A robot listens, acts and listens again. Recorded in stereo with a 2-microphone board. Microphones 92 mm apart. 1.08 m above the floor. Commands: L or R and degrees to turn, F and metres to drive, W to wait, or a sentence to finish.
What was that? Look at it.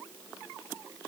W
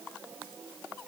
W
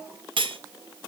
R65
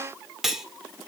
Found it: cutlery clinking, straight ahead, 2 to 4 m away.